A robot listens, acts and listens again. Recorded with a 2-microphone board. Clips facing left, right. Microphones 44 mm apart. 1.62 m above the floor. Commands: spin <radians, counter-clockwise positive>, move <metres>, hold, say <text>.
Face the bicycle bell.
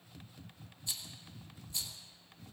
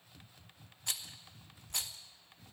hold
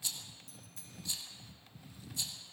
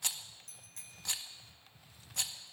spin -1.05
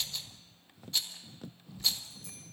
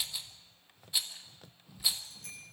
spin -0.96
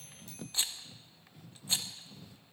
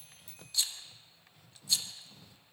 spin -0.17
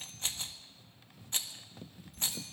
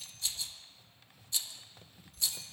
hold
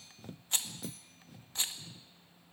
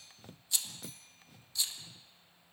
say Found it: a bicycle bell, straight ahead.